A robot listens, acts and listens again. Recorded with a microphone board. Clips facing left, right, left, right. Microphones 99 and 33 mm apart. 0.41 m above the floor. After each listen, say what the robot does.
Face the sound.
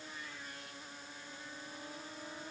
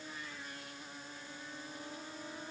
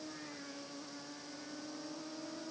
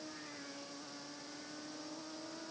Keep listening.
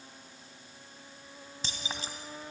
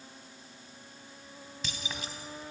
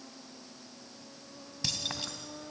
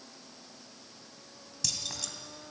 Turn 30° left.
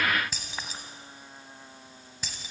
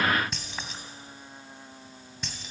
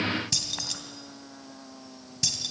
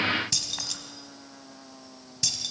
Facing the keys jangling, 2 to 4 m away.